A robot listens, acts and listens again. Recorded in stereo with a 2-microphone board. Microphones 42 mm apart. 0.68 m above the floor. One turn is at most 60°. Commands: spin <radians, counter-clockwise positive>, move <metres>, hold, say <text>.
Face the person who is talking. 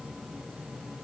hold
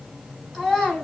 spin -0.52
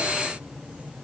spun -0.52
hold
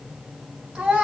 spin -1.05
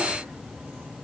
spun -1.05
spin -1.05
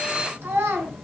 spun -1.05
spin -1.05
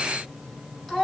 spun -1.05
spin 0.17
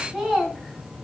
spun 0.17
say Facing the child speaking.